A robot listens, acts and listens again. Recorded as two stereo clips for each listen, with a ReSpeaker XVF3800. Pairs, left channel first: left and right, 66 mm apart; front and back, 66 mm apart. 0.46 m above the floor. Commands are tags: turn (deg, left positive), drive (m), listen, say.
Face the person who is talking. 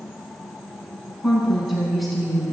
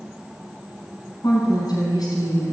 <say>Facing the woman speaking.</say>